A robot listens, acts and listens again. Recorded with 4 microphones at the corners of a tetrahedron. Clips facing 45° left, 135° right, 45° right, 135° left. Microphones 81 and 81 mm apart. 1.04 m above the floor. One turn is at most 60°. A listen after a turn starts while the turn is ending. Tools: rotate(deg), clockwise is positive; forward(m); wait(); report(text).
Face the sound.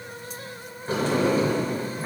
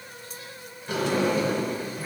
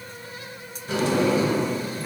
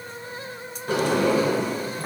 rotate(-60)
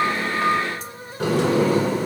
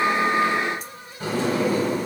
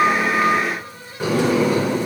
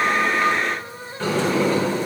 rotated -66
rotate(-35)
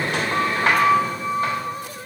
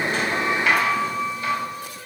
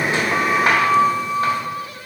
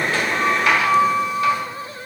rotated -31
report("Facing the sliding door, 1 to 2 m away.")